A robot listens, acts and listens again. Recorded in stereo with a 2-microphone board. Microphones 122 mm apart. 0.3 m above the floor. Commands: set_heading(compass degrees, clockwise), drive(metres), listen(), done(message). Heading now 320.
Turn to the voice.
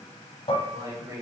set_heading(350)
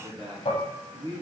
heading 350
set_heading(30)
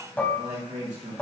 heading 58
set_heading(133)
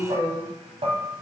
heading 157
done("Found it: a man speaking, straight ahead.")